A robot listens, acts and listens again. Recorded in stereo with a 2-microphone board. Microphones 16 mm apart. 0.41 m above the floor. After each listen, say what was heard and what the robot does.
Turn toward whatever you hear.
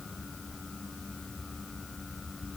Keep listening.
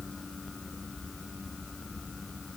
Keep listening.
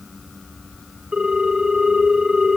The ringtone: about 60° right or 120° right. Turn 60° right.
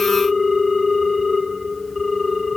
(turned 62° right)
Facing the ringtone, 2 to 4 m away.